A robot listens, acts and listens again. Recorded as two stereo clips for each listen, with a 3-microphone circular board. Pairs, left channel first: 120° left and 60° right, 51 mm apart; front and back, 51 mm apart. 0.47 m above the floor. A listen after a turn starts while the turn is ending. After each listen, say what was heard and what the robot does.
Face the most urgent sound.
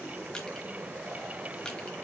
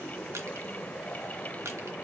Keep listening.
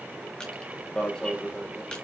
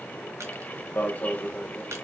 The alarm: 50° left. Turn 50° left.
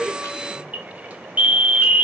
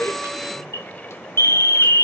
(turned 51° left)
Facing the alarm, under 1 m away.